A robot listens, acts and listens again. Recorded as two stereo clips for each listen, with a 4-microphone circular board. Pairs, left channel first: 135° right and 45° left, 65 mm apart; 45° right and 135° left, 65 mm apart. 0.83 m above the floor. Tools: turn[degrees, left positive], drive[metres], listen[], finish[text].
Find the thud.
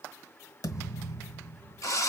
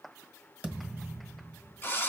Thought: The thud: 155° right.
Action: turn[-155]
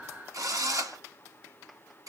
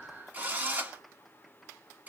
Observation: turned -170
Thought: Nothing new. It was at 15° left.
Action: turn[15]
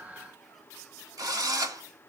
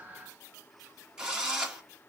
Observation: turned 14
Action: finish[Facing where the thud came from. I can't hear it now.]